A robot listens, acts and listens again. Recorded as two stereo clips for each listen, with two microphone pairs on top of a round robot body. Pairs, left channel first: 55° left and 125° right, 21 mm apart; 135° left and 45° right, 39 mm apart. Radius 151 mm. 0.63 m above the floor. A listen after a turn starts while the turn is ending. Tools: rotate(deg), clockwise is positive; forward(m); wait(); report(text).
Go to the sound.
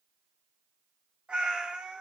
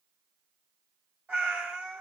rotate(95)
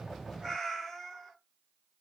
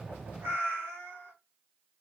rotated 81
rotate(15)
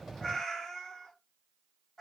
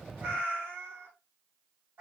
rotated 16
forward(1.0)
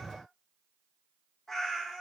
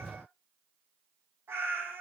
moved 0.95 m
rotate(15)
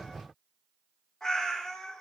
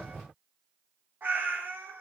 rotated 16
forward(1.0)
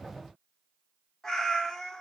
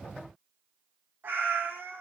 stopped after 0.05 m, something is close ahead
report("I am next to the cat meowing.")